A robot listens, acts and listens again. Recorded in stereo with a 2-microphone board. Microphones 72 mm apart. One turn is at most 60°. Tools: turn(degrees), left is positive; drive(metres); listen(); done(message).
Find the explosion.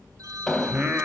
turn(degrees=30)
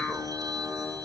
listen()
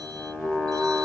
done("I heard an explosion, but can't make it out now. It was about 20° right or 140° left.")